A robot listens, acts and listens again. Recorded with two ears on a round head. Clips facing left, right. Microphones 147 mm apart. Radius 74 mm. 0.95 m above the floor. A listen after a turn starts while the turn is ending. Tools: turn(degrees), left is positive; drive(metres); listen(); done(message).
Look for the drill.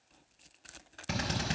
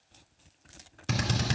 turn(degrees=-55)
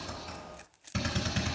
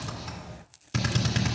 turn(degrees=-70)
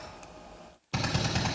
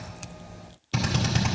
done("Found it: a drill, straight ahead, 1 to 2 m away.")